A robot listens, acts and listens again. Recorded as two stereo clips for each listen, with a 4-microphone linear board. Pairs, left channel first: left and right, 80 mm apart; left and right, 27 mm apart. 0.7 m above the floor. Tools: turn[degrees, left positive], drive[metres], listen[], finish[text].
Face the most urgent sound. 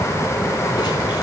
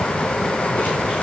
Action: listen[]
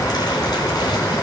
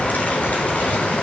Action: listen[]
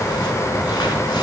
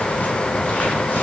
Action: finish[I can't make out anything urgent to turn to.]